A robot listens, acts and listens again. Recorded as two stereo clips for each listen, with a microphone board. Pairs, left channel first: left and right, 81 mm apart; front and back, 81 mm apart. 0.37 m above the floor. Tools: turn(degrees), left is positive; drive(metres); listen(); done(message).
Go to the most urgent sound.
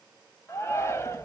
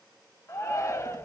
turn(degrees=40)
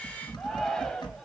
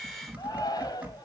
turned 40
drive(metres=1.0)
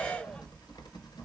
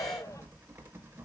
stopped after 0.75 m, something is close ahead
listen()
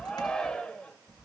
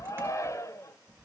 turn(degrees=15)
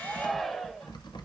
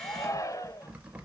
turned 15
done("I am next to the shout.")